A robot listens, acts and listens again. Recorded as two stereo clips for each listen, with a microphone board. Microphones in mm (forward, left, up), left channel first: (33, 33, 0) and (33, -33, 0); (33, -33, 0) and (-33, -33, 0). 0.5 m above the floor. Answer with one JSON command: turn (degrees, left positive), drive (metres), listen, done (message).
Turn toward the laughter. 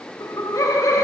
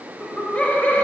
{"turn": 60}
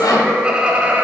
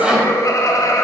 {"turn": -25}
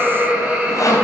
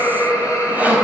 {"turn": -25}
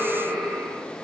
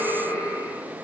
{"turn": -15}
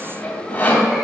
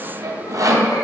{"listen": true}
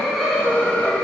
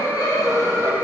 {"done": "Facing the laughter."}